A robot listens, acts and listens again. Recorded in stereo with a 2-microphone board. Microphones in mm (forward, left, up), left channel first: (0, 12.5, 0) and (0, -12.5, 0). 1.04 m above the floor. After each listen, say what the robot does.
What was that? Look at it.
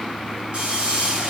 Turn 50° right.
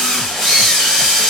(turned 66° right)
Turn 15° left.
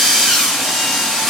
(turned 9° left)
Found it: a drill, straight ahead, 2 to 4 m away.